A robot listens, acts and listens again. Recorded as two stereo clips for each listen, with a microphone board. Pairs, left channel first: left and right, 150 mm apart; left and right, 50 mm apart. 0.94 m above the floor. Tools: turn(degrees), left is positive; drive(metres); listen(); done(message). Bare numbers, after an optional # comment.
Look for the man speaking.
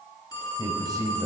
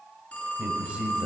# The man speaking: about 25° right or 155° right.
turn(-25)
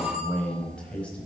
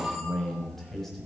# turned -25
# So it is at 10° left.
turn(10)
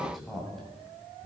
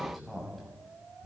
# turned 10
done("Found it: a man speaking, straight ahead, over 4 m away.")